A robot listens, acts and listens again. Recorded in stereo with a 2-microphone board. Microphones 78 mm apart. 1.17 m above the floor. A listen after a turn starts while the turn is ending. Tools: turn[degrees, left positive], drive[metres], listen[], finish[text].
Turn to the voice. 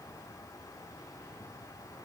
Action: listen[]
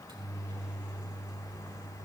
Action: listen[]
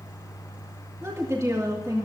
Thought: The woman speaking: about 45° right or 135° right.
Action: turn[-45]
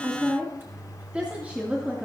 Thought: So it is at 20° right.
Action: turn[-20]
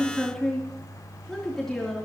Action: finish[Facing the woman speaking, 2 to 4 m away.]